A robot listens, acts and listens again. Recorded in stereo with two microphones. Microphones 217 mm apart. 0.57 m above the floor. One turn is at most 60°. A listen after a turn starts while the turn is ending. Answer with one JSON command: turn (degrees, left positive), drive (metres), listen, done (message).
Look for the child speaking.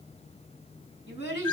{"turn": 55}
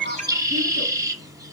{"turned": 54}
{"listen": true}
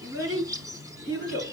{"turn": 60}
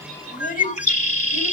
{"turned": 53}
{"turn": 40}
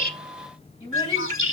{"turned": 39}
{"turn": 25}
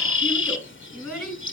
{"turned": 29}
{"done": "Facing the child speaking, 2 to 4 m away."}